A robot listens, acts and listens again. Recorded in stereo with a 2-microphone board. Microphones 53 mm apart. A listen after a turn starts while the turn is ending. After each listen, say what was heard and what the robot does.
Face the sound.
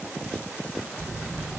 The phone buzzing: about 25° right or 155° right. Turn 25° right.
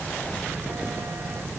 So it is at 130° right. Turn 130° right.
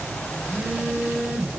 Found it: a phone buzzing, straight ahead.